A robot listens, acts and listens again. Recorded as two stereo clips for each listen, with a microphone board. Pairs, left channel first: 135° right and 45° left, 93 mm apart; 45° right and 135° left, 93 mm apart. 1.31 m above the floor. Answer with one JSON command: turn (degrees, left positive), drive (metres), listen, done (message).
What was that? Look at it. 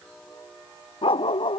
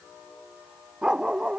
{"turn": -145}
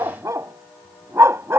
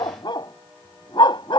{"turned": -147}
{"turn": -15}
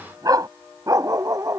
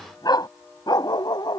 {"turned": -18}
{"done": "Facing the dog barking."}